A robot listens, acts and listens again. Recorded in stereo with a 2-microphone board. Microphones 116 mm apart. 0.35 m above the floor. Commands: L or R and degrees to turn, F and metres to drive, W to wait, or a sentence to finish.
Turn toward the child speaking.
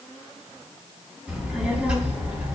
R30
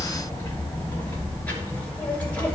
L10
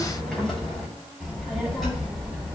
Facing the child speaking.